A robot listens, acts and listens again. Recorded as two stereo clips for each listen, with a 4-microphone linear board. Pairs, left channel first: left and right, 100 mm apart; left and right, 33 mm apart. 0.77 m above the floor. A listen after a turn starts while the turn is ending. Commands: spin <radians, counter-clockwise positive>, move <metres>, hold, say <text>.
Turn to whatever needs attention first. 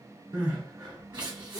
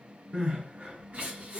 spin -0.79
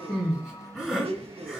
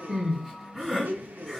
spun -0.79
say Found it: crying, straight ahead.